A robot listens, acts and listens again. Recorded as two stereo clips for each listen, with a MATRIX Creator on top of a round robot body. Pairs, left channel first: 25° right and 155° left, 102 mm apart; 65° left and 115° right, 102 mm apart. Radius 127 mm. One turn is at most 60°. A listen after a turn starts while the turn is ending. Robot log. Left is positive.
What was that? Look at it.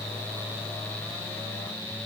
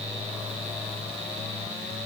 cmd idle
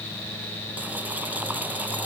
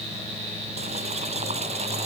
cmd idle
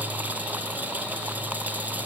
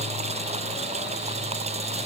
note: The boiling: 125° right.
cmd yaw -60
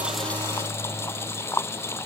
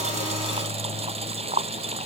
note: The boiling is now 90° right.
cmd yaw -60
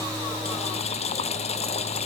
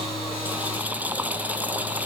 note: The boiling is now 35° right.
cmd yaw -35
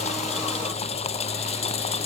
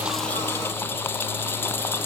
end: Facing the boiling.